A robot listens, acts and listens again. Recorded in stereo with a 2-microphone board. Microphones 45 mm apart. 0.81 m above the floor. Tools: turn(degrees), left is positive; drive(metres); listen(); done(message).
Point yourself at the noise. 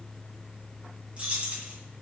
turn(degrees=-30)
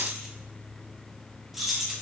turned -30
done("Facing the keys jangling, under 1 m away.")